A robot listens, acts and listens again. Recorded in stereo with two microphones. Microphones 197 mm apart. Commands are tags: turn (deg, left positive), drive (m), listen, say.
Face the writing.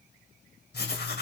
<turn deg="65"/>
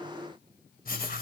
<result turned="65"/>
<turn deg="50"/>
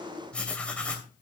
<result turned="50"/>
<say>Facing the writing.</say>